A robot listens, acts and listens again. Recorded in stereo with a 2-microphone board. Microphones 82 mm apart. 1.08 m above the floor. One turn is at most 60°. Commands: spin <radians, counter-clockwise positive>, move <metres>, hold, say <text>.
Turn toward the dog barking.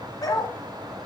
spin 0.87
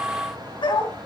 spin 1.05
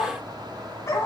spin 0.70
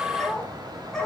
say Found it: a dog barking, straight ahead, over 4 m away.